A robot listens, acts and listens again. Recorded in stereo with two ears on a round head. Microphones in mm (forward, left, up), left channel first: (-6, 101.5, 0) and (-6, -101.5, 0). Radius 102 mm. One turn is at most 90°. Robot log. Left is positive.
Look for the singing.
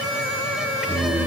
cmd yaw -30
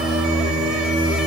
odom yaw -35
note: So it is at 130° right.
cmd yaw -90
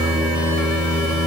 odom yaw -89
note: The singing is now 20° right.
cmd yaw -20
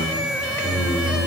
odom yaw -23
note: The singing is now 10° left.
cmd yaw +10
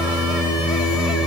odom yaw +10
end: Found it: singing, straight ahead, 2 to 4 m away.